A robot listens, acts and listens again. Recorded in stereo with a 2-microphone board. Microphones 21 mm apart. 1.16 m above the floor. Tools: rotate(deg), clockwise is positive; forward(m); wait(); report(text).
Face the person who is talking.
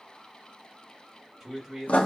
rotate(20)
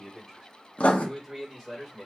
rotate(30)
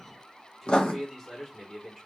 rotate(-10)
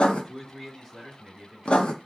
report("Facing the man speaking.")